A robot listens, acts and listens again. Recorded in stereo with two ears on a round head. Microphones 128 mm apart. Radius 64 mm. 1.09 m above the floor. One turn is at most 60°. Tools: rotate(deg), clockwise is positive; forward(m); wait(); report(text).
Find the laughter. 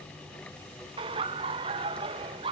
rotate(35)
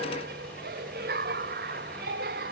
rotate(60)
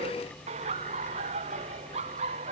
rotate(45)
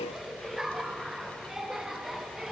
report("Found it: laughter, straight ahead.")